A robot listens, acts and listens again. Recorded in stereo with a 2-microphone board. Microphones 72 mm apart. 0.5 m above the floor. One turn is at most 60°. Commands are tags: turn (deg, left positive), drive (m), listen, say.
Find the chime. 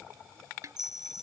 <turn deg="-60"/>
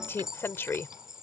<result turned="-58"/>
<turn deg="-10"/>
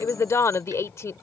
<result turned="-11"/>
<listen/>
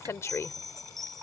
<say>Found it: a chime, straight ahead.</say>